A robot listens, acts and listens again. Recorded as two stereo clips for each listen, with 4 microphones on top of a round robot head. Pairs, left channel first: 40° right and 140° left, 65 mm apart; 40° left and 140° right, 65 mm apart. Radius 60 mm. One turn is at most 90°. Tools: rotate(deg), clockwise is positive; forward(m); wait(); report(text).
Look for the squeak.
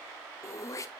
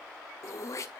wait()
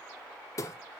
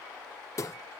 wait()
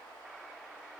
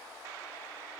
report("I can't make out a squeak, only throat clearing.")